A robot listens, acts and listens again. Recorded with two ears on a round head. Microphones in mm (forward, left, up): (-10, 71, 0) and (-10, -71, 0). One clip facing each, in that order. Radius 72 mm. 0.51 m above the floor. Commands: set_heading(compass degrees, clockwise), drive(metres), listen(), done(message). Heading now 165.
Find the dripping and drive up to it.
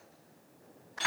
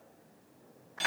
listen()
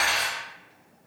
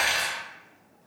listen()
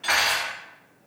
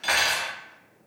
done("I can't make out dripping to turn to.")